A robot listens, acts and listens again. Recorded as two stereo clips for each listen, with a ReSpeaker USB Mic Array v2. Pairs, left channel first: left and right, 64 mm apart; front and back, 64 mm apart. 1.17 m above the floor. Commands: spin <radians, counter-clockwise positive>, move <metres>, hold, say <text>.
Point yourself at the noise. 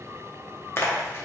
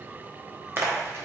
spin 2.36
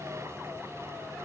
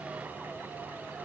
say Facing where the splash came from. I can't hear it now.